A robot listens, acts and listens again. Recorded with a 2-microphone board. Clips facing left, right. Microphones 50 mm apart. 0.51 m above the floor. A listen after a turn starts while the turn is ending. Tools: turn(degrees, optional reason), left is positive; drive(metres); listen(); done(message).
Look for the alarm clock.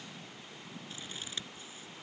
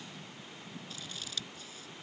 listen()
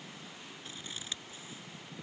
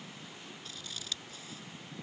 listen()
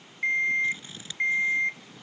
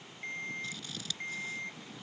turn(degrees=70, reason="The alarm clock: about 70° left or 110° left.")
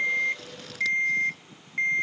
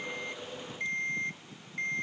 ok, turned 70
turn(degrees=40, reason="So it is at 40° left.")
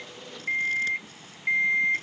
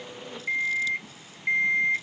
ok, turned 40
done("Facing the alarm clock.")